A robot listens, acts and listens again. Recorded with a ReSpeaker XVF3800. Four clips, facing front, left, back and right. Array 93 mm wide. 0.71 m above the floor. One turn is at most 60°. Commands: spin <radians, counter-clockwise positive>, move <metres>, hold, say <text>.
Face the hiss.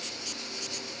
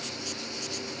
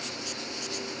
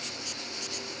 hold
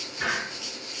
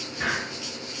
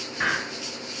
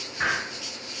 spin -1.05
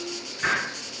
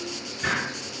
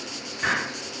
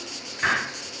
spin -1.05
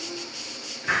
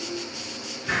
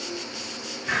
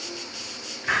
spin -1.05
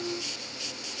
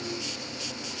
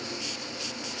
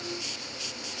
hold
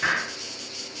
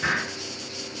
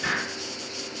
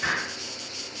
spin -0.17
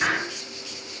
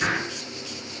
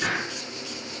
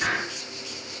say Found it: a hiss, straight ahead.